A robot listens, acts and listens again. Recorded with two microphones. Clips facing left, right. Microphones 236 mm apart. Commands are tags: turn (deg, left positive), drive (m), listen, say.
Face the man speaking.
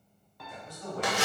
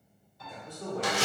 <turn deg="-65"/>
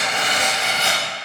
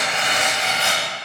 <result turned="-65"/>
<listen/>
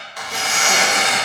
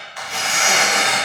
<listen/>
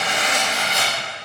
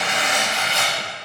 <say>I heard a man speaking, but can't make it out now. It was about straight ahead or 50° right.</say>